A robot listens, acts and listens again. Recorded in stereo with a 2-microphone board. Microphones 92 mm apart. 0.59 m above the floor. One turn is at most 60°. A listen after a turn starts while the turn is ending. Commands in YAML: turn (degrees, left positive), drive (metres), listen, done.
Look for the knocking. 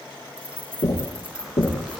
turn: 60
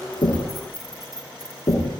turn: 50
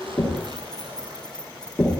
done: "Found it: knocking, straight ahead."